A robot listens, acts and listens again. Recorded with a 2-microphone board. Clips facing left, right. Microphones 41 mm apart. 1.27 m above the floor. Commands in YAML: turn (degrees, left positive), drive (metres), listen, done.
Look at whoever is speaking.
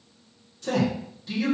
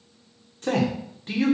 turn: -50
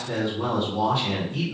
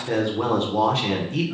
turn: -80
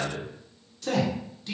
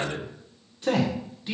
turn: -20
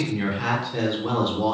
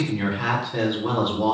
done: "Facing the man speaking."